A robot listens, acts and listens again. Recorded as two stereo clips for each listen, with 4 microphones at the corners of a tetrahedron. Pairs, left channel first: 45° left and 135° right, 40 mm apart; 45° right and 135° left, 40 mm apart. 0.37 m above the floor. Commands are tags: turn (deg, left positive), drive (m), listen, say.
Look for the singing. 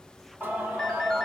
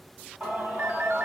<turn deg="180"/>
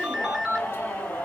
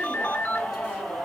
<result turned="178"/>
<turn deg="15"/>
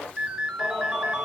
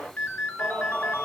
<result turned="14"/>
<say>Facing the singing, 2 to 4 m away.</say>